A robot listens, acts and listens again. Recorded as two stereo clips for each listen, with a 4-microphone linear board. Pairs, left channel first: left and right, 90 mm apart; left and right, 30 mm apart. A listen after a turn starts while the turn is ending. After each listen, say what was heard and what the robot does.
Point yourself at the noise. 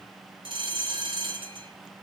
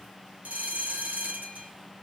The bell: about 70° right or 110° right. Turn 70° right.
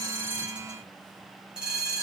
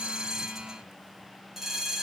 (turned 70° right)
So it is at 10° right. Turn 10° right.
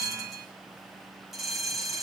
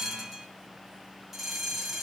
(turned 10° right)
Facing the bell, over 4 m away.